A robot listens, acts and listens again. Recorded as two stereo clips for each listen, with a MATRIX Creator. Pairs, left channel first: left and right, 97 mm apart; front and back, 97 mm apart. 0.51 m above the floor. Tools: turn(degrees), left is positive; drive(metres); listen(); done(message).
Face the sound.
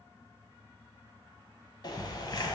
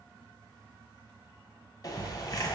turn(degrees=50)
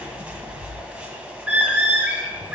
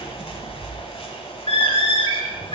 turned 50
turn(degrees=-10)
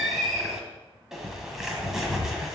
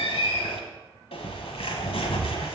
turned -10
done("Found it: a bird, straight ahead, 1 to 2 m away.")